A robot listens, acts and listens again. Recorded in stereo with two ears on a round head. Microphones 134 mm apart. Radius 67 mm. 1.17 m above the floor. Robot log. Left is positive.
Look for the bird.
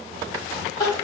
cmd idle
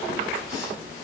cmd idle
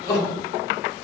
end: I can't make out a bird to turn to.